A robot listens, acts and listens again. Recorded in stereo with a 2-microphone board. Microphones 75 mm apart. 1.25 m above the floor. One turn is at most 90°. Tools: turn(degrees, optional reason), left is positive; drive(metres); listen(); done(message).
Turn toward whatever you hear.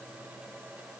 listen()
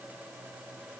listen()
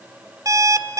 turn(degrees=-50, reason="The alarm clock: about 50° right or 130° right.")
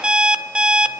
turn(degrees=-15, reason="So it is at 15° right.")
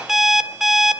done("Found it: an alarm clock, straight ahead.")